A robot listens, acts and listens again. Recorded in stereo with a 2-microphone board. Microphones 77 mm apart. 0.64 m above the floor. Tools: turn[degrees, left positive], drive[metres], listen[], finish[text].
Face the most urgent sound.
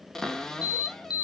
Thought: The alarm: about 60° left or 120° left.
Action: turn[60]
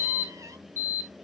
Thought: So it is at 30° left.
Action: turn[30]
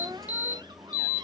Thought: The alarm is now 25° right.
Action: turn[-25]
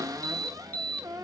Thought: The alarm is now 20° left.
Action: turn[20]
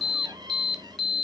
Action: finish[Facing the alarm, 1 to 2 m away.]